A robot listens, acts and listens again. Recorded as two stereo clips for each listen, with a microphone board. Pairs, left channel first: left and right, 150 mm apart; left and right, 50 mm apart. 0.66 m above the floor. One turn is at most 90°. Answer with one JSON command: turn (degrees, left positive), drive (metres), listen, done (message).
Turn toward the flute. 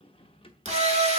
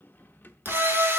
{"turn": -30}
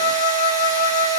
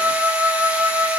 {"turn": -90}
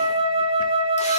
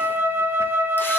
{"turn": -40}
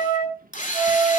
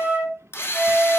{"turn": -25}
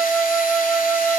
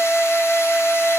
{"turn": -10}
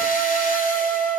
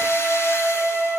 {"done": "Facing the flute, over 4 m away."}